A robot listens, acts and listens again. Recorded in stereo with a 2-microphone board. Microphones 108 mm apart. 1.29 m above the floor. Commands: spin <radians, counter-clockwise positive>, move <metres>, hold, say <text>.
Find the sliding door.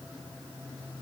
hold
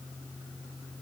hold
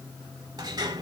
spin -0.70
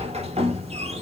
spin -1.75
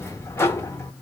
spin 0.44
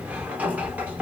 spin -0.26
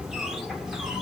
say Facing the sliding door.